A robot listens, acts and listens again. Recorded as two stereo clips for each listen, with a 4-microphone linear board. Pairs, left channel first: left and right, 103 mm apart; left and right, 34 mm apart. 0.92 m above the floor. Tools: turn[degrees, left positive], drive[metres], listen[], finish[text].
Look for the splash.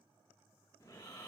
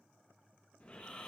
Action: listen[]
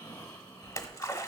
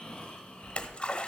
Thought: The splash: about 40° left or 140° left.
Action: turn[40]
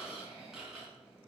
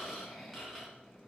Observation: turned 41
Action: listen[]
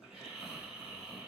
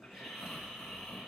Action: finish[I heard a splash, but can't make it out now. It was about 5° right or 100° left.]